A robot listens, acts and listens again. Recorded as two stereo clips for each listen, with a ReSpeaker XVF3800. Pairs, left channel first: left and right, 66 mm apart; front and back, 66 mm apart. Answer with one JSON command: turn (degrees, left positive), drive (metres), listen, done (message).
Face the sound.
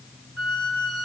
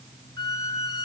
{"done": "Facing the squeak."}